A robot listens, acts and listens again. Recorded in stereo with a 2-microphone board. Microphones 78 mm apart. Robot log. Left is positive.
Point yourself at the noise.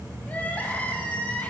note: The crying: about 20° left or 160° left.
cmd yaw +20
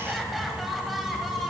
end: Facing the crying, 1 to 2 m away.